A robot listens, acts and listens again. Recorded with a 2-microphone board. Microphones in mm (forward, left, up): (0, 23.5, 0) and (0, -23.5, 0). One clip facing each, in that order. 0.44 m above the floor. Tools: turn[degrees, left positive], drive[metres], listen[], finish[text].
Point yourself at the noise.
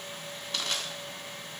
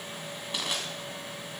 Action: turn[-30]
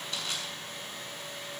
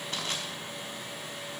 Thought: So it is at 135° right.
Action: turn[-135]
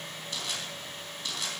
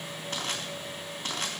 Thought: The crushing is now 40° right.
Action: turn[-40]
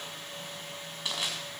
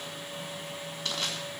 Thought: The crushing is now 15° left.
Action: turn[15]
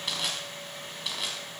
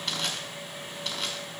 Action: finish[Facing the crushing.]